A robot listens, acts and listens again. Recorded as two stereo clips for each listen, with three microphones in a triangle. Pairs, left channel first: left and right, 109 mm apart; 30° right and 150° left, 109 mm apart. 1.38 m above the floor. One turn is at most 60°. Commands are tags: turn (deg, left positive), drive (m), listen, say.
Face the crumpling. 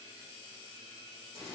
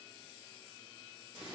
<listen/>
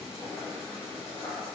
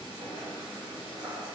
<listen/>
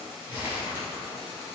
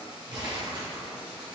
<turn deg="-60"/>
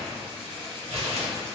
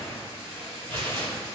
<turn deg="-60"/>
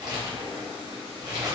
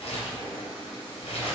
<turn deg="-40"/>
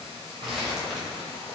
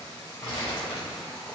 <say>Found it: crumpling, straight ahead, under 1 m away.</say>